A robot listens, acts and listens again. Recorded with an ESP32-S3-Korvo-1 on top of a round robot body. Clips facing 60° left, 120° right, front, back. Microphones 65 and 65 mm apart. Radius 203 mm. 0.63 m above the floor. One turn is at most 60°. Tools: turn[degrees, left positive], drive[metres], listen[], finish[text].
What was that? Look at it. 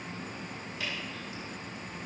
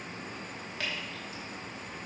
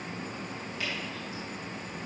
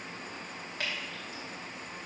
Thought: The dripping: 145° right.
Action: turn[-60]
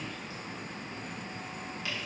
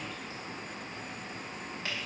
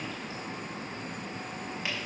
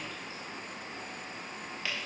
Thought: The dripping is now 70° right.
Action: turn[-60]
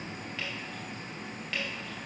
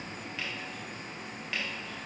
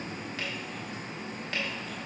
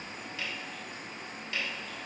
Thought: The dripping is now 35° right.
Action: turn[-35]
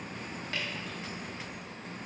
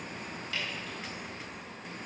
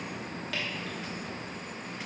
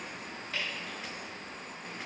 Thought: The dripping is now 10° left.
Action: turn[10]
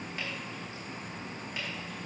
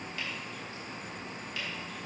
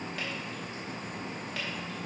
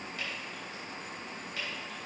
Action: listen[]
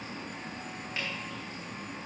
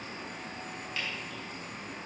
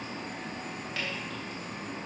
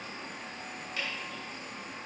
Action: finish[Facing the dripping, 2 to 4 m away.]